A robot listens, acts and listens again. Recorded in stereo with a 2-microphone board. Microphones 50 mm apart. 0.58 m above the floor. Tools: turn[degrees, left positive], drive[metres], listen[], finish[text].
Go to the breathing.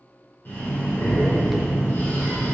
Thought: The breathing: about 50° left or 130° left.
Action: turn[50]
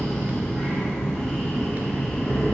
Thought: So it is at 10° left.
Action: turn[10]
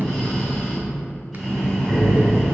Action: drive[1.0]
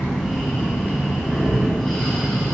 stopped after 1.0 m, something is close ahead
Action: finish[I am next to the breathing.]